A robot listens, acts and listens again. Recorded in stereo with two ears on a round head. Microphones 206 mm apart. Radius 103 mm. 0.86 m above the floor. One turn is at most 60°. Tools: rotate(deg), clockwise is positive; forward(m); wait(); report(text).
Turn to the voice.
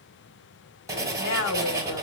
rotate(-55)
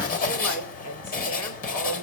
rotate(-60)
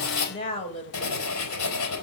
rotate(-25)
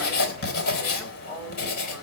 report("Found it: a woman speaking, straight ahead, over 4 m away.")